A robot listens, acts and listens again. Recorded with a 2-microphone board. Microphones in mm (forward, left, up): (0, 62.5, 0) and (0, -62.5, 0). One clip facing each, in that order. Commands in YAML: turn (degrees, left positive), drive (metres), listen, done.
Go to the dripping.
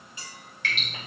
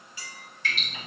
turn: 70
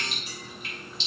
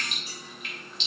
turn: 35
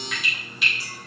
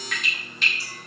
drive: 1.0
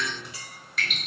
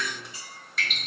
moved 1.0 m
drive: 1.0
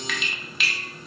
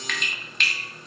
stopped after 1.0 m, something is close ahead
done: "I am next to the dripping."